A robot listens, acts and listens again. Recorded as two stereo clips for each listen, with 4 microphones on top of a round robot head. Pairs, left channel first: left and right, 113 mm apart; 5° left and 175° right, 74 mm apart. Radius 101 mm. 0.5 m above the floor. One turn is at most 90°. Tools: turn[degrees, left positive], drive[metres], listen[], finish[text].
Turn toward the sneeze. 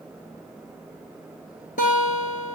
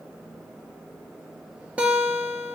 Action: listen[]
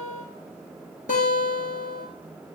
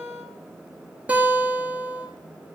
Action: listen[]
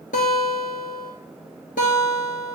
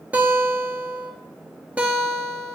Action: finish[I can't make out a sneeze to turn to.]